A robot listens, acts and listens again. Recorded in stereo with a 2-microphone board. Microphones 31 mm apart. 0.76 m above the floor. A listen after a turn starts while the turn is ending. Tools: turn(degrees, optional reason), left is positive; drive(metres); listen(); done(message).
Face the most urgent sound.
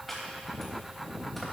listen()
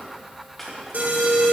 turn(degrees=-65, reason="The alarm: about 65° right or 115° right.")
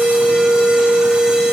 turn(degrees=-35, reason="So it is at 35° right.")
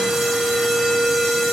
done("Facing the alarm, 2 to 4 m away.")